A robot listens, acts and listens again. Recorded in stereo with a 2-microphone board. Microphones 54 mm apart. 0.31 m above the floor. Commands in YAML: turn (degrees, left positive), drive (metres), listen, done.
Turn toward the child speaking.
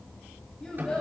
turn: 20
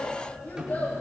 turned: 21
turn: 40
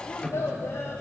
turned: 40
turn: 105
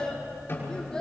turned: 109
turn: 10
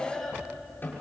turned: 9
done: "Facing the child speaking, over 4 m away."